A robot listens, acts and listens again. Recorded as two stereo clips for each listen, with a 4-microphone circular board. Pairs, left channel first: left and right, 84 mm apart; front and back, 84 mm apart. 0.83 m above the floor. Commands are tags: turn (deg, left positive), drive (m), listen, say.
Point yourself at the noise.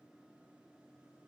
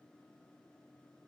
<listen/>
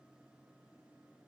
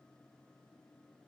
<listen/>
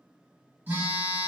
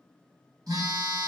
<turn deg="-155"/>
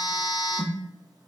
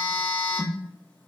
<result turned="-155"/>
<turn deg="-60"/>
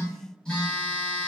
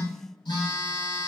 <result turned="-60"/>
<turn deg="10"/>
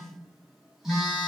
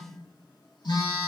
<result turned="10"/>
<say>Facing the phone buzzing.</say>